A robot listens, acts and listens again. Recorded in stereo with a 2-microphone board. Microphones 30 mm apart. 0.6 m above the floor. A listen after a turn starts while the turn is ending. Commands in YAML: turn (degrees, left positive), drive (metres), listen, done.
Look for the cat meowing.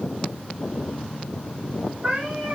turn: -35
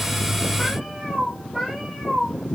done: "Found it: a cat meowing, straight ahead, over 4 m away."